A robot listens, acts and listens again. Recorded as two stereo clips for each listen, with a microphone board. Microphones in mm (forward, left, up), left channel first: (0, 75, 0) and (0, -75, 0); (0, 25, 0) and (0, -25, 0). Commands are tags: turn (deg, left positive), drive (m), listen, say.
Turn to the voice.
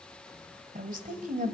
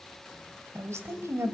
<turn deg="-60"/>
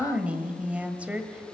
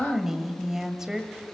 <turn deg="-10"/>
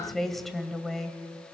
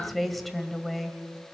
<say>Facing the woman speaking.</say>